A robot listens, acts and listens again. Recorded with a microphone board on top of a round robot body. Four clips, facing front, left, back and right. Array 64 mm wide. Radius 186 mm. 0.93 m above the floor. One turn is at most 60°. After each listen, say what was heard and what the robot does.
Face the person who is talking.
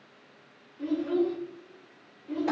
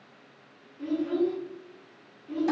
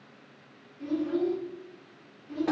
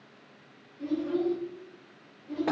The child speaking: 10° left. Turn 10° left.
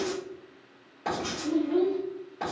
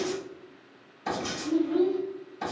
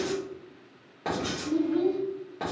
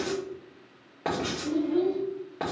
Facing the child speaking.